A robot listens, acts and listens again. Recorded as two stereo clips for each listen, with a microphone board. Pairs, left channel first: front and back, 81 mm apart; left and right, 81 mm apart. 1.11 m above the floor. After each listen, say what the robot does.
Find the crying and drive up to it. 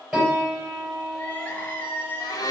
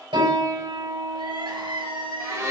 Turn 70° right.
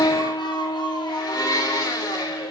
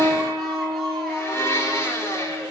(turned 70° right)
Keep listening.
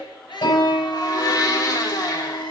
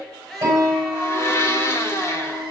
Drive 1.0 m forward.
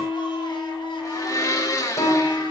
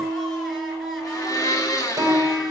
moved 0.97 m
Keep listening.
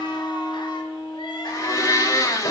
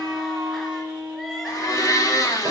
Keep listening.
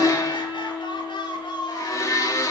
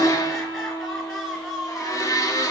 Drive 1.0 m forward.
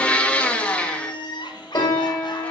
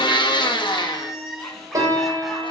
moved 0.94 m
Drive 1.0 m forward.
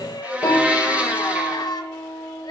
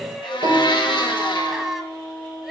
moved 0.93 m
Drive 1.0 m forward.
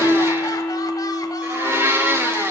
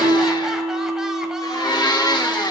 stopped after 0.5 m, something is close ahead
Keep listening.
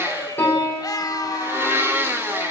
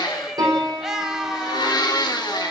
Arrived at the crying, straight ahead.